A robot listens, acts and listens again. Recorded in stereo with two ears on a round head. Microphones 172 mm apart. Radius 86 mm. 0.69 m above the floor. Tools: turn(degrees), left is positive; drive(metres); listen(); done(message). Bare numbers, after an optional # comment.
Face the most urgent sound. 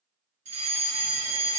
# The fire alarm: about 40° right or 140° right.
turn(-40)
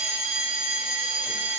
# So it is at 10° right.
turn(-10)
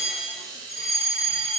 done("Facing the fire alarm, 2 to 4 m away.")